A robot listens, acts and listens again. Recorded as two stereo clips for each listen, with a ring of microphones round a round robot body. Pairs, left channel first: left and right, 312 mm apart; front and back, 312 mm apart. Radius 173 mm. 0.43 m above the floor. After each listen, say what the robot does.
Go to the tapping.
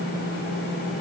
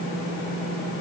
Keep listening.
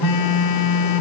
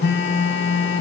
Keep listening.
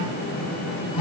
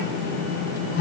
I can't make out tapping to turn to.